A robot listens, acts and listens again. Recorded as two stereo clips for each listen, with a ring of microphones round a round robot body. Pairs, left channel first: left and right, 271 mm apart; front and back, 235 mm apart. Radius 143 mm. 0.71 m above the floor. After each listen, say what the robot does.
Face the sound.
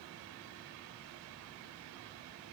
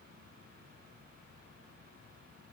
Keep listening.
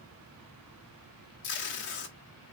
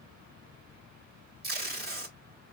Turn 135° left.
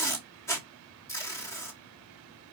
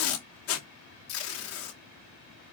Turn 10° left.
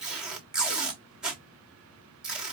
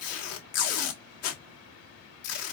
Facing the tape being pulled, 1 to 2 m away.